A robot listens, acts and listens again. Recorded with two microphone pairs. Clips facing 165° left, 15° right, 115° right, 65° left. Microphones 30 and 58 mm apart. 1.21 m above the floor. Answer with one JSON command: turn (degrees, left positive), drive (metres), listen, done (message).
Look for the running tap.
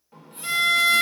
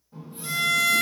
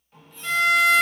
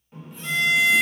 {"turn": 145}
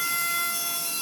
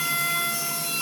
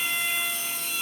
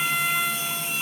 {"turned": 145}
{"done": "Facing the running tap, under 1 m away."}